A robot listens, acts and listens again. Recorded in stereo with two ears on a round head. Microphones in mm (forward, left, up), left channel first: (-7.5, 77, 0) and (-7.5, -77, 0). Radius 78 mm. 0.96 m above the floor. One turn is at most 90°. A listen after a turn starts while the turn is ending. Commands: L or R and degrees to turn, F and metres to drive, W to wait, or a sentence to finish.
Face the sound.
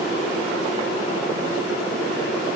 W
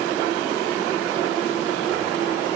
W
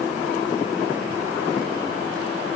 I can't make out anything.